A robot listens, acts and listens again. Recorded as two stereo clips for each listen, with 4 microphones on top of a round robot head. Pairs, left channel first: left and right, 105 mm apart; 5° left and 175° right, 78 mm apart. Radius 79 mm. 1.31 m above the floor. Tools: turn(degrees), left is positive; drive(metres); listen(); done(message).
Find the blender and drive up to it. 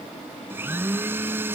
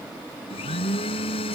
turn(degrees=-20)
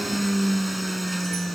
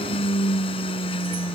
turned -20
drive(metres=1.0)
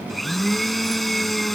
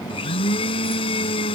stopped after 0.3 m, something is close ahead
done("Something is in my way. I am facing the blender but have not reached it.")